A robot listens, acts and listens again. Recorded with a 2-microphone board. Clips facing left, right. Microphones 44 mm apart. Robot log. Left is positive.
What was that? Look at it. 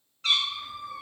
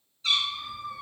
note: The cat meowing: about 70° left or 110° left.
cmd yaw +70
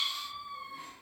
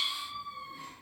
end: Found it: a cat meowing, straight ahead.